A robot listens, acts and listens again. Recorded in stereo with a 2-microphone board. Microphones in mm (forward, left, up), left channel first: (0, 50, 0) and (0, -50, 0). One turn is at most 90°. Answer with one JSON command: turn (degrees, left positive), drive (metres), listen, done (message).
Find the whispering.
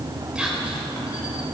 {"turn": -30}
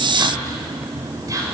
{"turn": -90}
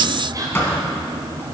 {"turn": -45}
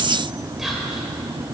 {"listen": true}
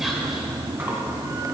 {"done": "Facing the whispering, 2 to 4 m away."}